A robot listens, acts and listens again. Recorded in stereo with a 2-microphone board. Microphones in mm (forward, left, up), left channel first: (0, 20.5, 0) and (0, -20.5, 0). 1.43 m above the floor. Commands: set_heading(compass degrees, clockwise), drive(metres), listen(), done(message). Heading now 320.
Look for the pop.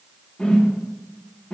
listen()
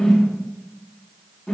listen()
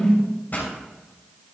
set_heading(275)
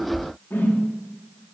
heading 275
listen()
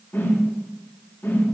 done("I heard a pop, but can't make it out now. It was about straight ahead or 90° left.")